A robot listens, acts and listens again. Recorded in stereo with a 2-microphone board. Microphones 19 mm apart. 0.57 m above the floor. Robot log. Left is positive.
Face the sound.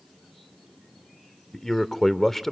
note: The man speaking: about 25° left or 155° left.
cmd yaw +25
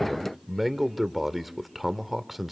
end: Found it: a man speaking, straight ahead, 1 to 2 m away.